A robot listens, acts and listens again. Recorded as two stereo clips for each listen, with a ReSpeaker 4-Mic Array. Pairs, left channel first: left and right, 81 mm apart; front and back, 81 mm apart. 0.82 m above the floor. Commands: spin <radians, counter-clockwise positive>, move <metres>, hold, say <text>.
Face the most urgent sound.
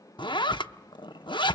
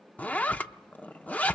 hold
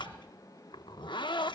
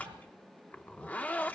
hold
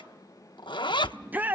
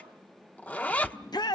spin -0.44
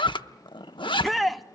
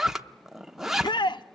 say Found it: a shout, straight ahead.